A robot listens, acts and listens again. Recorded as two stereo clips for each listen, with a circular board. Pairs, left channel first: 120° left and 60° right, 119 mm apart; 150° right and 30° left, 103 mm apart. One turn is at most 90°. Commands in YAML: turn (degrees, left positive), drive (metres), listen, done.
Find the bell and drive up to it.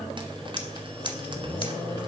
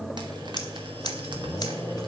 listen: true
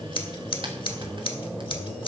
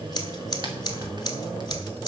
listen: true
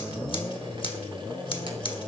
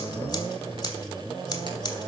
done: "I can't make out a bell, only scissors."